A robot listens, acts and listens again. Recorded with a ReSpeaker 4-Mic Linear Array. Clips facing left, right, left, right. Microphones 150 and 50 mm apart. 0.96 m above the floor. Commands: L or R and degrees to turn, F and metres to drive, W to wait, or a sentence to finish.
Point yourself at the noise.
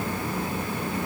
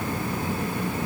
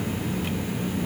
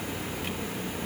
W
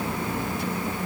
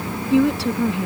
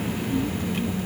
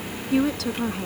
R90
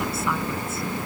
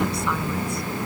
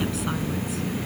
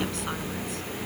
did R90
W
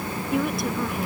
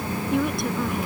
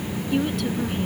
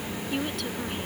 Found it: a woman speaking, straight ahead.